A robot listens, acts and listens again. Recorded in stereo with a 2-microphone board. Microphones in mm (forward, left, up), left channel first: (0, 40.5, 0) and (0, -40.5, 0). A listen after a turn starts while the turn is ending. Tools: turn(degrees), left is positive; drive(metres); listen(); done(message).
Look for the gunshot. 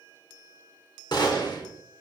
turn(degrees=60)
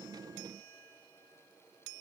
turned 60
listen()
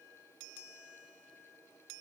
done("I heard a gunshot, but can't make it out now. It was about straight ahead or 60° left.")